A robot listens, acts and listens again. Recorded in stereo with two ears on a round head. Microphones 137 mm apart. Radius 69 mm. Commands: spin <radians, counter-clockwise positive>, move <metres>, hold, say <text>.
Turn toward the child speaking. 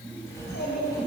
spin 1.57
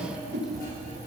hold
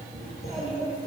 say Found it: a child speaking, straight ahead, over 4 m away.